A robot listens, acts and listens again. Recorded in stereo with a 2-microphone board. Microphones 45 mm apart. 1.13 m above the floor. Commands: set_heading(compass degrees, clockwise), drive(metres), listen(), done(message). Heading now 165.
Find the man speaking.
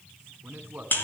set_heading(205)
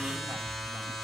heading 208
listen()
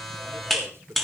set_heading(323)
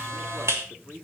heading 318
set_heading(338)
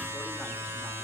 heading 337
listen()
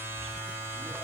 listen()
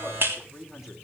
done("Facing the man speaking, 2 to 4 m away.")